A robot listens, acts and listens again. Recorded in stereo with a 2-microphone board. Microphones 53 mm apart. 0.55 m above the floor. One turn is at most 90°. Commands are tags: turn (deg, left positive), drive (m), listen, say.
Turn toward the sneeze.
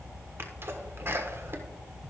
<turn deg="-50"/>
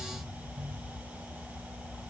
<listen/>
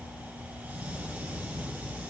<say>I heard a sneeze, but can't make it out now. It was about straight ahead or 80° right.</say>